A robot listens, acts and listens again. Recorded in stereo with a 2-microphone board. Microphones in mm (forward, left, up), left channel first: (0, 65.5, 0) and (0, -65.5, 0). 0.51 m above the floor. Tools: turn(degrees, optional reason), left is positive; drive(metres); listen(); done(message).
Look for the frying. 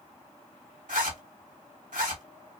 listen()
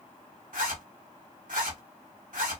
listen()
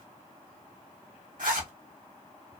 done("I can't make out frying, only a zipper.")